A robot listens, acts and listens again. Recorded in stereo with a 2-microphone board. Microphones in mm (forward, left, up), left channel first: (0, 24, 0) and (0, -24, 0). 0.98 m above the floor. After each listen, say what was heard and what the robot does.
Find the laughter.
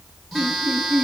The laughter: about 40° left or 140° left. Turn 40° left.
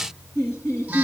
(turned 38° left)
So it is at 100° left. Turn 100° left.
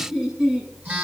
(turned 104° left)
The laughter is now 10° right. Turn 10° right.
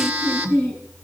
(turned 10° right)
Facing the laughter, over 4 m away.